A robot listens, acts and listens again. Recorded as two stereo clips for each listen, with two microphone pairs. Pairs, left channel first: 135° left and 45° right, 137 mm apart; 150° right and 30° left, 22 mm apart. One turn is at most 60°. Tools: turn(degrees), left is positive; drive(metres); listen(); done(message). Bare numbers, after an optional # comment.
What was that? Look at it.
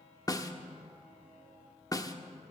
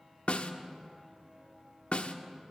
# The snare drum: 160° right.
turn(-60)
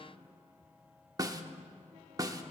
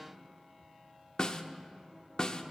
# The snare drum is now 105° right.
turn(-60)
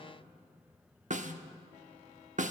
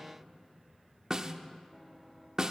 # The snare drum is now 30° right.
turn(-30)
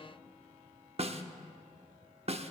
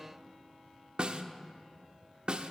# The snare drum is now 10° right.
turn(-10)
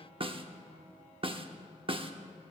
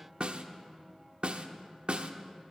done("Facing the snare drum.")